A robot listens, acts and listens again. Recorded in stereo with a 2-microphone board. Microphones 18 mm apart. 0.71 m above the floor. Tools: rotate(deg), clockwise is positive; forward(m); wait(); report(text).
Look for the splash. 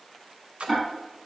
rotate(90)
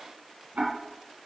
report("I heard a splash from this way, but can't make it out now.")